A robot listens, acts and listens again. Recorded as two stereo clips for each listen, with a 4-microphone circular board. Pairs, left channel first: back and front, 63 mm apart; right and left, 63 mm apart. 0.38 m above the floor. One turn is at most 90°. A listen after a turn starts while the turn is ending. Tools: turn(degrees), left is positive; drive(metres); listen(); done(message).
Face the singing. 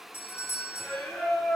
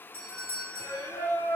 turn(degrees=-90)
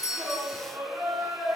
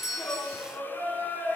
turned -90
turn(degrees=-25)
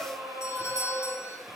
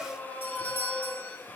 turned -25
turn(degrees=-15)
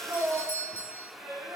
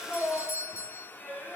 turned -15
turn(degrees=10)
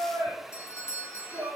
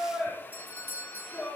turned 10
done("Facing the singing, 2 to 4 m away.")